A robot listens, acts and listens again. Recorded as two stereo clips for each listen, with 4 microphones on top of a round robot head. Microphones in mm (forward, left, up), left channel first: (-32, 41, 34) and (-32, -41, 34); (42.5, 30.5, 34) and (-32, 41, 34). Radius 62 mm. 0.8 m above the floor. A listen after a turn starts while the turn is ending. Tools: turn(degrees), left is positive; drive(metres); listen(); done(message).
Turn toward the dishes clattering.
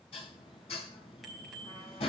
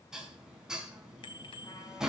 turn(degrees=90)
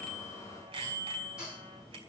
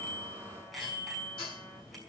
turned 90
done("Found it: dishes clattering, straight ahead.")